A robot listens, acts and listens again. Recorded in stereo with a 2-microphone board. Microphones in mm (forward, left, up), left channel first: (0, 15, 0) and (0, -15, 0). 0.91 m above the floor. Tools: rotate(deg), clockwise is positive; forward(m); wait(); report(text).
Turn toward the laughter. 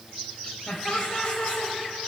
rotate(-40)
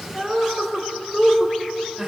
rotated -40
rotate(15)
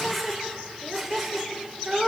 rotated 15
rotate(10)
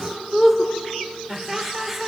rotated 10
report("Facing the laughter.")